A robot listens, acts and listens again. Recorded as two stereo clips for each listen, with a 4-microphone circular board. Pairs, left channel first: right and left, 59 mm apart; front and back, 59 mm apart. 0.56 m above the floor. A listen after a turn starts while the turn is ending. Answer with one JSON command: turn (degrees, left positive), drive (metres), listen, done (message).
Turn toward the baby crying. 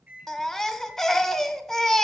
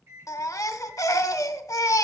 {"done": "Facing the baby crying."}